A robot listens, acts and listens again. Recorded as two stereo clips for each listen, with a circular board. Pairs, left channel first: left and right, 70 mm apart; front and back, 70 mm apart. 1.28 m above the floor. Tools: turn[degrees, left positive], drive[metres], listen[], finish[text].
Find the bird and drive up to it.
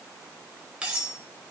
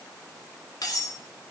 Action: listen[]
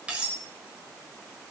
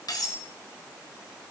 Action: listen[]
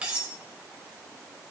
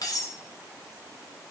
Action: finish[I can't make out a bird to turn to.]